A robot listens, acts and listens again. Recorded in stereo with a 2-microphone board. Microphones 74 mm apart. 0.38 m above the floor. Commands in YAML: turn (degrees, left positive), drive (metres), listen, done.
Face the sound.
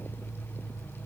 listen: true
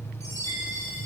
turn: 45
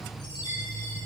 turn: 90
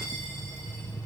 listen: true
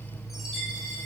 done: "Found it: a chime, straight ahead."